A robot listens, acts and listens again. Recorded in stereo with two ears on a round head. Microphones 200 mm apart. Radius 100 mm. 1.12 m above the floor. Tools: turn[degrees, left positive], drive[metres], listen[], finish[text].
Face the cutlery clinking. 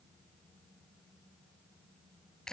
Action: listen[]
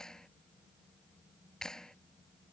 Action: listen[]
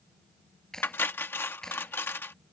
Action: turn[30]
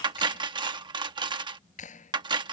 Thought: So it is at 20° right.
Action: turn[-20]
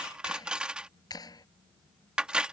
Action: finish[Found it: cutlery clinking, straight ahead.]